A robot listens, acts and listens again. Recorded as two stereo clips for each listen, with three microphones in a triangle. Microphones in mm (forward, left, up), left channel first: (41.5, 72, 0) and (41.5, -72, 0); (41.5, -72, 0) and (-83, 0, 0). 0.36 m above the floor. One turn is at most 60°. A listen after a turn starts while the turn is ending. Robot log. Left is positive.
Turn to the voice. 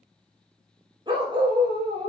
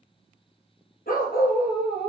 cmd idle
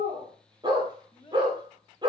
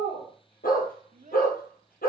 note: The child speaking: 140° left.
cmd yaw +60
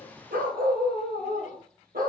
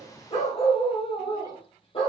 note: Nothing new. It was at 80° left.
cmd yaw +60
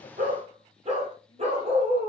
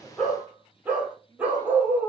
note: Nothing new. It was at 20° left.
cmd yaw +20
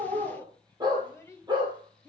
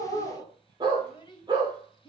note: The child speaking is now 20° left.
cmd yaw +20
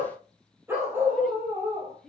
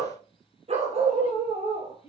end: Found it: a child speaking, straight ahead, 1 to 2 m away.